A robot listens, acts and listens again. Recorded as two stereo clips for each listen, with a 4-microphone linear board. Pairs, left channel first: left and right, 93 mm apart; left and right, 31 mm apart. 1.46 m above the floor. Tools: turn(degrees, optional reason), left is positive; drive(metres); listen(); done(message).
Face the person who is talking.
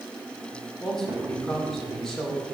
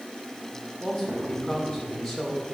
turn(degrees=30)
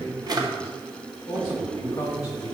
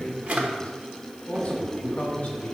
turn(degrees=145, reason="So it is at 145° left.")
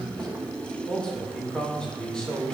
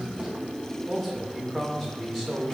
turn(degrees=10, reason="The man speaking is now 10° left.")
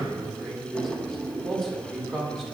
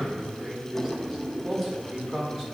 done("Facing the man speaking, 2 to 4 m away.")